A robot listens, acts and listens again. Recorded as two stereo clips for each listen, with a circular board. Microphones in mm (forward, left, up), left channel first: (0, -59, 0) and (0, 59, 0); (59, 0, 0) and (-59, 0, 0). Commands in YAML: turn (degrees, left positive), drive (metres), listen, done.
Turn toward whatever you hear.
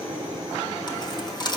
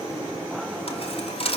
turn: -35
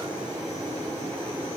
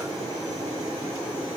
done: "Facing where the dropped coin came from. I can't hear it now."